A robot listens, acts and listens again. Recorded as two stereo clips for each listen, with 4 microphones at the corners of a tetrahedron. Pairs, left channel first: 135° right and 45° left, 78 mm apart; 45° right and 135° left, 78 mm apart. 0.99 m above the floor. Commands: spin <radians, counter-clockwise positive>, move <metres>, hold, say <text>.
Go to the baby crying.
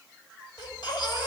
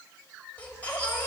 spin -2.01
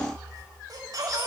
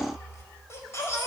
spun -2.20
spin 0.17
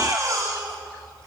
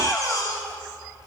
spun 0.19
move 1.0
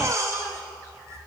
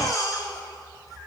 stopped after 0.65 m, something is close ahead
say Something is in my way. I am facing the baby crying but have not reached it.